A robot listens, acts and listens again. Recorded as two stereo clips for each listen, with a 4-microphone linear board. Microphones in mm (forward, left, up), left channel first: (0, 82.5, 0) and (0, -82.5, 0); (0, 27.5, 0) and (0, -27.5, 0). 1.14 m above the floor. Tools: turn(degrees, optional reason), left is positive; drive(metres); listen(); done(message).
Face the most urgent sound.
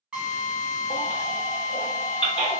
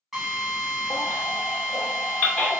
turn(degrees=30, reason="The baby crying: about 30° left or 150° left.")
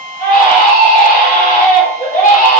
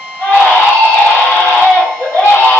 turn(degrees=120, reason="So it is at 120° left.")
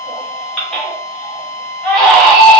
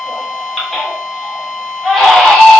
done("Facing the baby crying, under 1 m away.")